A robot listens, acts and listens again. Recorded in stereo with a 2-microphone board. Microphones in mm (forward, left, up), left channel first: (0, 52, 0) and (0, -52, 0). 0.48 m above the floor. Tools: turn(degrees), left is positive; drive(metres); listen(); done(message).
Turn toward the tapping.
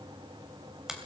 listen()
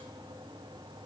listen()
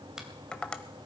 turn(degrees=30)
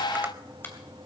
listen()
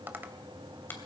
turn(degrees=-20)
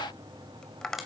done("Found it: tapping, straight ahead, 1 to 2 m away.")